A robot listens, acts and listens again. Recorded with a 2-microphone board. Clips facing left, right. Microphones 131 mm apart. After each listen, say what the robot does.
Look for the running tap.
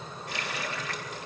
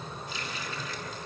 Turn 70° left.
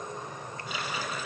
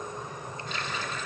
Turn 10° left.
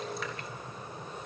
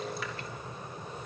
Keep listening.
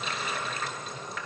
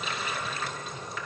Facing the running tap.